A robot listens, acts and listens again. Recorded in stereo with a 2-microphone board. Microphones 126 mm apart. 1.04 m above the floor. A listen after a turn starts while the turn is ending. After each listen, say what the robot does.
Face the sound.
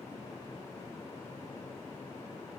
Keep listening.
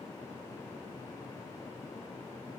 Keep listening.
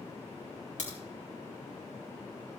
Turn 70° left.
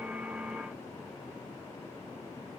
Keep listening.
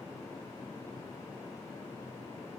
I heard a crack, but can't make it out now. It was about straight ahead or 40° left.